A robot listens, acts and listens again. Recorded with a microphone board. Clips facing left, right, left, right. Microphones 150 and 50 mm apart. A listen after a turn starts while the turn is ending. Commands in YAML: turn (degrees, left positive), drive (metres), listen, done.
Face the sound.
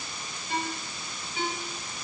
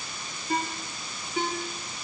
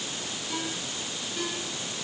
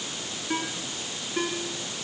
turn: -45
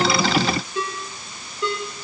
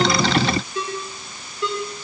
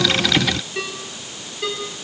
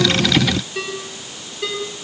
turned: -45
done: "Found it: a ringtone, straight ahead, over 4 m away."